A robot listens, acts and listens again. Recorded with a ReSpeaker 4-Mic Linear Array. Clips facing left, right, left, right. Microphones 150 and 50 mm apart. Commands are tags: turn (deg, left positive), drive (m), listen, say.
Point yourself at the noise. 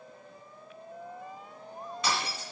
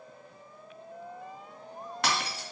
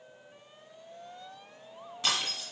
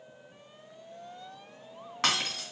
<turn deg="-90"/>
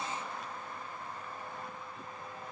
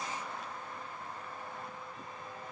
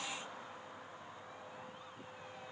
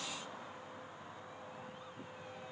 <say>I heard breaking glass from this way, but can't make it out now.</say>